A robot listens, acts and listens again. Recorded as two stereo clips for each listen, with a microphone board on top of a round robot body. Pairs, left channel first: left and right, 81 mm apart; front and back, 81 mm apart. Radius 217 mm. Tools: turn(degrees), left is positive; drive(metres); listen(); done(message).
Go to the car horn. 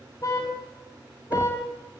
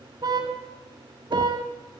turn(degrees=140)
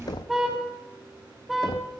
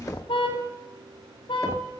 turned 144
drive(metres=1.0)
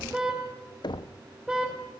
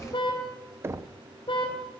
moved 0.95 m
turn(degrees=-10)
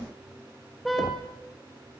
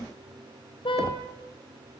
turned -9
drive(metres=1.0)
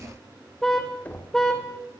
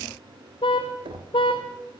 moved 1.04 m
drive(metres=1.0)
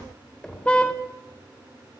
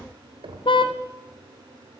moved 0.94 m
turn(degrees=15)
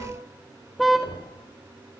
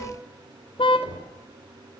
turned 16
drive(metres=1.0)
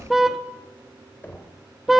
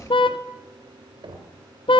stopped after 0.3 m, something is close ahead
done("I am next to the car horn.")